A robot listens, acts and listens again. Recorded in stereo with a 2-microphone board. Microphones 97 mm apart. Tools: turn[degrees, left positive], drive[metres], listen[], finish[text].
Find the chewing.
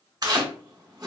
Thought: The chewing: about 45° right or 135° right.
Action: turn[-45]
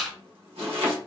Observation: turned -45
Action: finish[Found it: chewing, straight ahead.]